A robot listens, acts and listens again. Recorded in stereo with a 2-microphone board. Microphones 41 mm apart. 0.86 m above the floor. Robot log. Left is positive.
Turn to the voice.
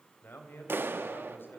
note: The man speaking: about 65° left or 115° left.
cmd yaw +65
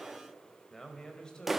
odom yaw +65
note: So it is at 20° left.
cmd yaw +20
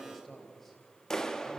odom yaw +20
end: Facing the man speaking, 2 to 4 m away.